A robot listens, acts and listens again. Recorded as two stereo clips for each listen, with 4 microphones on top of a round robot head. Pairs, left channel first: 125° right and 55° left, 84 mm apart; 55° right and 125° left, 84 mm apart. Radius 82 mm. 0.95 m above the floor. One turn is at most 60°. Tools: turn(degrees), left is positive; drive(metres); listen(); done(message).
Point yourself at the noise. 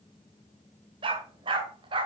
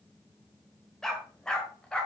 turn(degrees=25)
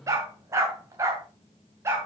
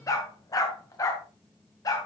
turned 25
done("Found it: a dog barking, straight ahead, 2 to 4 m away.")